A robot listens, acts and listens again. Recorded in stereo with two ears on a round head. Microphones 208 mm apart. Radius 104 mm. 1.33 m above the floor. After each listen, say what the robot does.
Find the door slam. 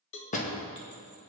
Turn 35° left.
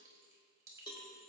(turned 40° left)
Keep listening.
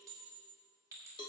I heard a door slam, but can't make it out now. It was about 5° right or 105° left.